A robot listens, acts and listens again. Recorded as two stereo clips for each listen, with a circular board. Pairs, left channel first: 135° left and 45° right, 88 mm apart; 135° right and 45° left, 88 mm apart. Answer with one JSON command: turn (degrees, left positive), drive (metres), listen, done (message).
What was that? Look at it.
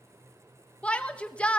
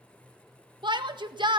{"turn": 60}
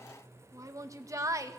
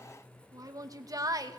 {"done": "Found it: a shout, straight ahead."}